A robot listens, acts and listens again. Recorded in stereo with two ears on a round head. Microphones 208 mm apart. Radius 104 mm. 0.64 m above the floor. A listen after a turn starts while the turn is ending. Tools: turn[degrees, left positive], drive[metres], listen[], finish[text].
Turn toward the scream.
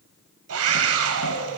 Thought: The scream: about 70° right or 110° right.
Action: turn[-70]
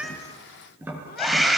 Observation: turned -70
Action: finish[Facing the scream, 2 to 4 m away.]